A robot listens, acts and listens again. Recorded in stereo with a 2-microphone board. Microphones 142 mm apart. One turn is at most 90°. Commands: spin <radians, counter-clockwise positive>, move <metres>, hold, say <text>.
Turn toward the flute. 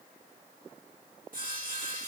hold
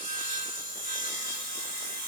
hold
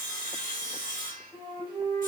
spin -0.52
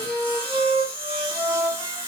spin -1.57
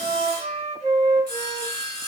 spin -0.87
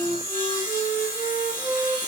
spin -0.35
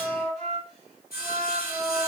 say Facing the flute, 1 to 2 m away.